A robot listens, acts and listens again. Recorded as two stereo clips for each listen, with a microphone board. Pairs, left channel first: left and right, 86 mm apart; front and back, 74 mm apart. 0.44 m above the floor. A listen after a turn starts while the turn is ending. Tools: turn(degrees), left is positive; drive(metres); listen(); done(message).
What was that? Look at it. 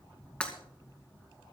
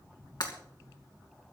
turn(degrees=15)
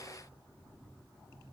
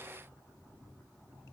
done("Facing where the breaking glass came from. I can't hear it now.")